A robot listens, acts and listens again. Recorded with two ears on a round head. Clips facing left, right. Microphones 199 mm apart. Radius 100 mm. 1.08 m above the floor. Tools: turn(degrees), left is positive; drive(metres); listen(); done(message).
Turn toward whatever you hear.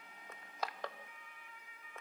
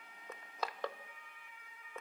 turn(degrees=-90)
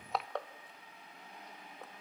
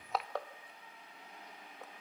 done("Found it: crushing, straight ahead.")